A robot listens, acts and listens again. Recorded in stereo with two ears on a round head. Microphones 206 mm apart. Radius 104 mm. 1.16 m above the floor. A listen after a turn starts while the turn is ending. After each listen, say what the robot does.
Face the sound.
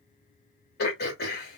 Turn 45° left.
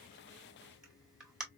Found it: throat clearing, straight ahead.